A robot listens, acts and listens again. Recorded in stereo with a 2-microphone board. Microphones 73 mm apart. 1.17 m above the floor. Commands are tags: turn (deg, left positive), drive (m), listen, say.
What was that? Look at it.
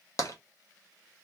<turn deg="45"/>
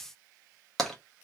<say>Found it: tapping, straight ahead, 1 to 2 m away.</say>